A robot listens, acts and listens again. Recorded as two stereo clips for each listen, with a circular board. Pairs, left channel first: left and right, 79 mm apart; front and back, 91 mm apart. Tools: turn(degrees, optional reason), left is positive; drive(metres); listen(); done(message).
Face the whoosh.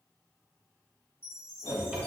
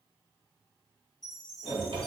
turn(degrees=65, reason="The whoosh: 65° left.")
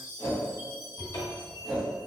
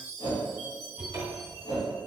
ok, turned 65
done("Found it: a whoosh, straight ahead, 1 to 2 m away.")